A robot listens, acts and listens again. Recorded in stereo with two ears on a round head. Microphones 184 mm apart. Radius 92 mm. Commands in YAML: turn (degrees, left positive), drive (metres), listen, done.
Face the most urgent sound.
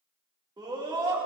turn: -20
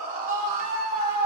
turn: -140
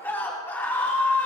turn: 10
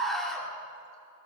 done: "Found it: a scream, straight ahead, 2 to 4 m away."